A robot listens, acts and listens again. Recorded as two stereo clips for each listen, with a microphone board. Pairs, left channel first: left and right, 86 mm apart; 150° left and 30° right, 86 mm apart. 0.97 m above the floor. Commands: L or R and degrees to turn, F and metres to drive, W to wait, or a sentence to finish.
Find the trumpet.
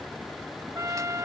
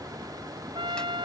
R35
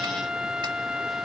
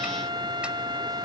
R10
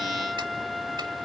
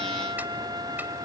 Facing the trumpet.